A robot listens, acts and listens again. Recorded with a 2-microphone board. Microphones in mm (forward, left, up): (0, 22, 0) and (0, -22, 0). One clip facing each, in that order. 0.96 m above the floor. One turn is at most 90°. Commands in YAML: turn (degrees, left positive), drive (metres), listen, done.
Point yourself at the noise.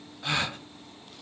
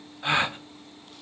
turn: -25
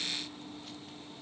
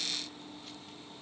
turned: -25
listen: true
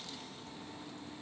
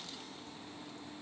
done: "I heard a gasp, but can't make it out now. It was about straight ahead or 130° right."